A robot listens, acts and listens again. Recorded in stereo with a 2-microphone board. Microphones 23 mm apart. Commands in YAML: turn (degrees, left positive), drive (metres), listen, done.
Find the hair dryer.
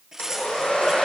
turn: 65
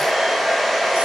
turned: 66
done: "Facing the hair dryer."